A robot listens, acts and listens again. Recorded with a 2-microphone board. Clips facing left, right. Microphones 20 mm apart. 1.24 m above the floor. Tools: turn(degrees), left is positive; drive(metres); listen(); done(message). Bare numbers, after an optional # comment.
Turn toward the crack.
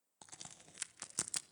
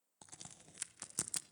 turn(30)
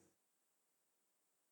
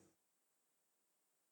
listen()
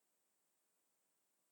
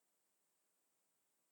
done("I heard a crack, but can't make it out now. It was about 20° right or 140° left.")